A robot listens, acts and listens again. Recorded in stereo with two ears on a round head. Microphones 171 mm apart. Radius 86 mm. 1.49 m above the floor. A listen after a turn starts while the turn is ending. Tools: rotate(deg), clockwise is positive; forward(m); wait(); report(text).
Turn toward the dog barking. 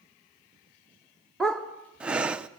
rotate(-30)
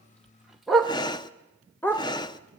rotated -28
rotate(-30)
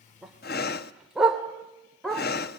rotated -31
rotate(-30)
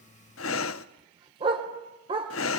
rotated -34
rotate(25)
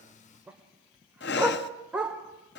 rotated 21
report("Facing the dog barking.")